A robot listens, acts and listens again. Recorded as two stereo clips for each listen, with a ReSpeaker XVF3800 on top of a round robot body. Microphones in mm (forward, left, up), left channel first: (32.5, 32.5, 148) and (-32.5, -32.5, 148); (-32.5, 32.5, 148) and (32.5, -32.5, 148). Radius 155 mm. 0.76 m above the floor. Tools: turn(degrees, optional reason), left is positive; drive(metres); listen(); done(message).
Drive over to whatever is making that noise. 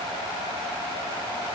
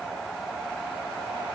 listen()
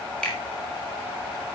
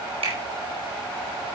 turn(degrees=-35, reason="The finger snap: 35° right.")
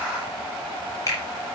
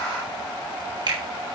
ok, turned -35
drive(metres=1.0)
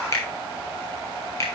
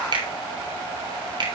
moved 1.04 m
turn(degrees=-10, reason="The finger snap is now 10° right.")
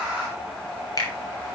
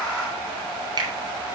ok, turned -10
drive(metres=1.0)
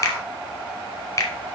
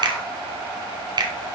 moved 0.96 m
turn(degrees=-10, reason="The finger snap is now 10° right.")
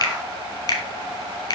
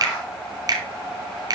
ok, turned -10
drive(metres=1.0)
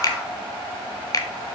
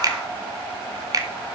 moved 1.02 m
drive(metres=1.0)
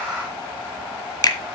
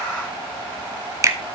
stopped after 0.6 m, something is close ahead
done("Arrived at the finger snap, straight ahead.")